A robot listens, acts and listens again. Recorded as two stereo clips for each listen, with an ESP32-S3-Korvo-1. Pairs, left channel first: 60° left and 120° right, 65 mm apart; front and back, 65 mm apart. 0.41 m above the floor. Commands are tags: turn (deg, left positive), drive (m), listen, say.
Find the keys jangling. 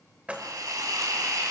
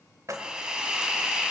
<turn deg="175"/>
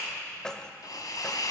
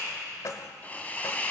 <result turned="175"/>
<turn deg="-20"/>
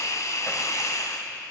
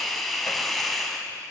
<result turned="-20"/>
<listen/>
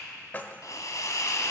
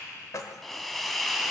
<say>Facing the keys jangling.</say>